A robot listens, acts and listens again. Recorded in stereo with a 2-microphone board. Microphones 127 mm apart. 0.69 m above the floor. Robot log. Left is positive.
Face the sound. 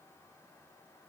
cmd idle
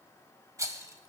note: The rattle: about 25° right or 155° right.
cmd yaw -25
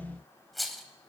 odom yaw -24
end: Found it: a rattle, straight ahead.